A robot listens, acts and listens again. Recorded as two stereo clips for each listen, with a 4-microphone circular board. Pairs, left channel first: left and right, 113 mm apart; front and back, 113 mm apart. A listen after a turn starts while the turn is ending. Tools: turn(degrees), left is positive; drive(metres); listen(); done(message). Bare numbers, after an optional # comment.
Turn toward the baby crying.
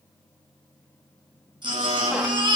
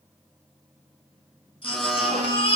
# The baby crying: 40° right.
turn(-40)
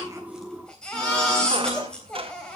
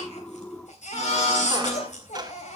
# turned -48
done("Found it: a baby crying, straight ahead.")